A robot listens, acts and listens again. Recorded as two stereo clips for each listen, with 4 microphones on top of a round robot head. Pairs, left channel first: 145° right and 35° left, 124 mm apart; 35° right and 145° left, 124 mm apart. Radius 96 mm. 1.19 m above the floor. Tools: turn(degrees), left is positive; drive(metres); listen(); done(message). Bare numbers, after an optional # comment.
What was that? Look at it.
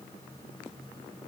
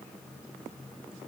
listen()
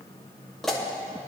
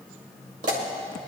# The pop: 125° left.
turn(125)
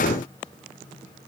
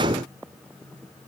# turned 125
done("I heard a pop from this way, but can't make it out now.")